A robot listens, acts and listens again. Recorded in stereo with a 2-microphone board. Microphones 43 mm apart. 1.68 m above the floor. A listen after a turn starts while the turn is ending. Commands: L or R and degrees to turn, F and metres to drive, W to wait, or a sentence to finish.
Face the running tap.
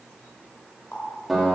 L60
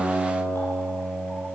W
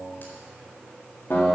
W
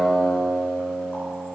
I heard a running tap, but can't make it out now. It was about straight ahead or 60° left.